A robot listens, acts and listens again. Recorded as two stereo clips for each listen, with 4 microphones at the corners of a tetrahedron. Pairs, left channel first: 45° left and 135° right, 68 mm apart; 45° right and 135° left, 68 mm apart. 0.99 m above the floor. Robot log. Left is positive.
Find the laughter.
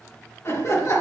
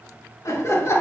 end: Found it: laughter, straight ahead, 2 to 4 m away.